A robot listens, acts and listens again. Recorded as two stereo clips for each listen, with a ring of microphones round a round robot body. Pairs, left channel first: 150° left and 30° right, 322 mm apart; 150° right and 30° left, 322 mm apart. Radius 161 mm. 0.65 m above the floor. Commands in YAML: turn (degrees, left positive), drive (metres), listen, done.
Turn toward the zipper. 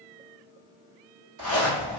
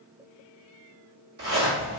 turn: -30
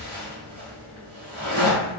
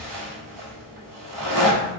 done: "Facing the zipper, 1 to 2 m away."